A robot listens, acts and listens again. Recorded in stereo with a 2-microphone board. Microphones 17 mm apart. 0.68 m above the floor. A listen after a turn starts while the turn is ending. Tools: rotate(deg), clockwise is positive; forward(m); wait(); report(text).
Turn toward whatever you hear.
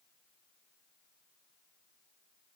wait()
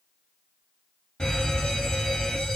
rotate(-50)
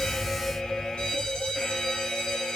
rotate(-65)
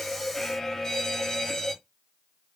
rotate(-25)
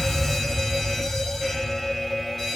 report("Found it: a fire alarm, straight ahead.")